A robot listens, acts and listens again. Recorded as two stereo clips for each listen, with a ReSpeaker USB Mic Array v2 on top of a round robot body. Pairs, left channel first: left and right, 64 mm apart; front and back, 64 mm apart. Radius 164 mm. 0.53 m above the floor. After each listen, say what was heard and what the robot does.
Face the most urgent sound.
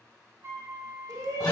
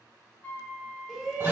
The shout: 95° right. Turn 95° right.
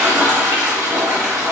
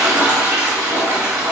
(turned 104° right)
Nothing new. It was at 10° left. Turn 10° left.
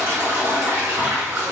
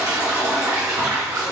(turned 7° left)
Keep listening.
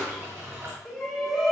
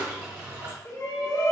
Facing the shout.